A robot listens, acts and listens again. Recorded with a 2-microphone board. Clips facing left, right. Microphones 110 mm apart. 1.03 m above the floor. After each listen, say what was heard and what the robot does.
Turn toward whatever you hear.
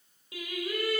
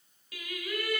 The singing: about 30° left or 150° left. Turn 30° left.
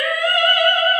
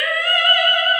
The singing: about 30° left or 150° left. Turn 30° left.
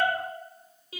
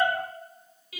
The singing: about 30° left or 150° left. Turn 30° left.
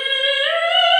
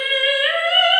The singing: about 20° left or 160° left. Turn 20° left.
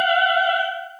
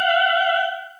Found it: singing, straight ahead.